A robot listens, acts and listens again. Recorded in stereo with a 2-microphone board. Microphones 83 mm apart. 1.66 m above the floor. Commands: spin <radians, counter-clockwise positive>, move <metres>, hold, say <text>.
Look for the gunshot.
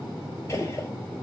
spin 0.61
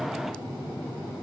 hold
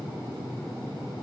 say I heard a gunshot, but can't make it out now. It was about straight ahead or 110° left.